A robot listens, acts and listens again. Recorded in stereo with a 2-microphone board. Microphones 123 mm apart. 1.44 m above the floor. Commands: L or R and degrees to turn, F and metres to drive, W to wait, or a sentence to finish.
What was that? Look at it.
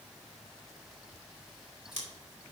R75
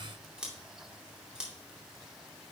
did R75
R10
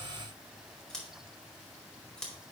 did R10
Found it: scissors, straight ahead.